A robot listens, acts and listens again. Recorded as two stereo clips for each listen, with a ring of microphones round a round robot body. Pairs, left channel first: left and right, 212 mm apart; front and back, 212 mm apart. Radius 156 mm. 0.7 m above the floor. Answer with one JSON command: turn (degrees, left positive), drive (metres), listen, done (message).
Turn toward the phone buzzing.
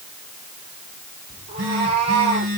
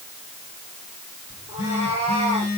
{"turn": -70}
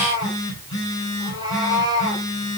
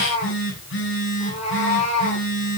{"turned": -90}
{"turn": 20}
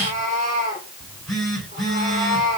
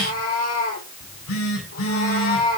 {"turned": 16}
{"done": "Facing the phone buzzing."}